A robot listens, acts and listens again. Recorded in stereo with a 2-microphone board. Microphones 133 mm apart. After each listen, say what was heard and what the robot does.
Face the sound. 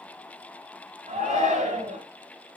The shout: about 70° right or 110° right. Turn 70° right.
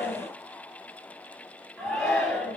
Facing the shout.